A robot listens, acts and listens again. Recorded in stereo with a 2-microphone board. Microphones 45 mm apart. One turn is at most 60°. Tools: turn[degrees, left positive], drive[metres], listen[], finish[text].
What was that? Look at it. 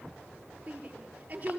Thought: The shout: about 35° right or 145° right.
Action: turn[-35]
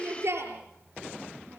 Thought: So it is at 115° right.
Action: turn[-60]
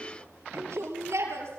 Thought: The shout is now 80° right.
Action: turn[-60]
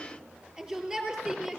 Thought: The shout is now 15° right.
Action: turn[-15]
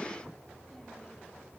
Action: listen[]
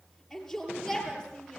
Action: finish[Facing the shout.]